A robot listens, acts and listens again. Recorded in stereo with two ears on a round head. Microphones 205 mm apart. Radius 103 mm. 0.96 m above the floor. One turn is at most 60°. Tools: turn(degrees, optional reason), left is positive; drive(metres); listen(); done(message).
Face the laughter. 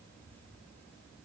listen()
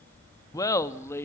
turn(degrees=30)
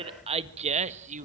turn(degrees=-35, reason="So it is at 35° right.")
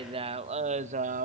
turn(degrees=-35, reason="The laughter is now 35° right.")
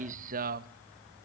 turn(degrees=-40, reason="The laughter is now 40° right.")
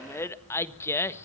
turn(degrees=10, reason="The laughter is now 10° left.")
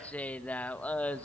done("Found it: laughter, straight ahead, 1 to 2 m away.")